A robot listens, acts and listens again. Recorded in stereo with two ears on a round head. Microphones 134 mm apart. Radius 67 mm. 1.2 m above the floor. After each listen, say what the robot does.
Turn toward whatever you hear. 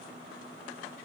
Keep listening.
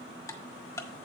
Turn 20° left.
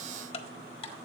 Turn 135° left.
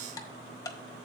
Turn 25° left.
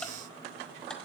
Keep listening.
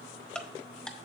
Facing the ticking.